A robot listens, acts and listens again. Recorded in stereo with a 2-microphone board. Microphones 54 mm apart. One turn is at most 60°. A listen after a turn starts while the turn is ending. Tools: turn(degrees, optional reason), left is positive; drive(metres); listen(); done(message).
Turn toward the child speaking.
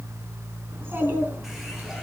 turn(degrees=-40, reason="The child speaking: about 40° right or 140° right.")
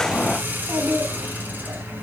turn(degrees=-60, reason="So it is at 120° right.")
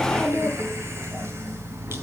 turn(degrees=-60, reason="The child speaking is now 75° right.")
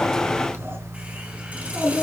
turn(degrees=-55, reason="The child speaking is now 55° right.")
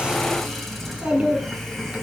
turn(degrees=-25, reason="The child speaking is now 25° right.")
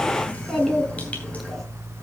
done("Facing the child speaking.")